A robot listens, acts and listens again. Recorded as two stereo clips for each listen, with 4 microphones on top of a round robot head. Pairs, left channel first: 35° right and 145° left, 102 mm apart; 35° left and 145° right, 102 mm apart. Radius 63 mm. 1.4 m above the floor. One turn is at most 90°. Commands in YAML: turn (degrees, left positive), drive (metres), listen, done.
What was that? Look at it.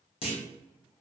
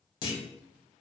turn: -10
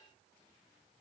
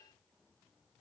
done: "Facing where the clunk came from. I can't hear it now."